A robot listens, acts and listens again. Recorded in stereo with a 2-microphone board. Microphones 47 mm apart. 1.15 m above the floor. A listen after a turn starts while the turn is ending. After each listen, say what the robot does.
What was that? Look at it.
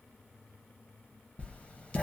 Turn 25° left.
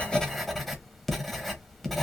Found it: writing, straight ahead.